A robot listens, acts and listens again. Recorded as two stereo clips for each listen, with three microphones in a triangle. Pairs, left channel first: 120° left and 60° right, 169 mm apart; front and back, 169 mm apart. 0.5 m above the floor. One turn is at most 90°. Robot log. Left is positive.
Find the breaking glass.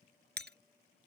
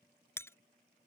note: The breaking glass: 75° right.
cmd yaw -75
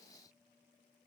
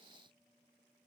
end: Facing where the breaking glass came from. I can't hear it now.